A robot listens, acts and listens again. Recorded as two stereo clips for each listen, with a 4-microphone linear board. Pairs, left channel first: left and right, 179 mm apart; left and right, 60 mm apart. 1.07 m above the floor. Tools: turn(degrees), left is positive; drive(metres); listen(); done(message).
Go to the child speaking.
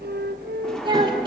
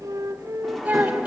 turn(degrees=-25)
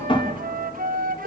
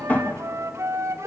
listen()
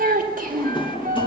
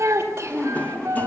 turn(degrees=-130)
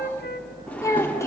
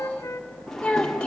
turn(degrees=15)
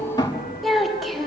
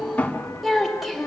drive(metres=1.0)
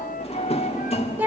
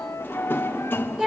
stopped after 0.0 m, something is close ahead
turn(degrees=-10)
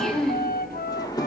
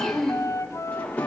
done("Blocked. The child speaking is further on, straight ahead.")